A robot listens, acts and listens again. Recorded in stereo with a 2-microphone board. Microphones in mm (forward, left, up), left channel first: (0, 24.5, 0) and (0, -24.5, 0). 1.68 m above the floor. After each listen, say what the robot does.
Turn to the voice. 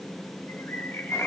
Keep listening.
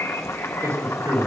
Turn 65° right.
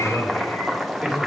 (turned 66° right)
Facing the man speaking.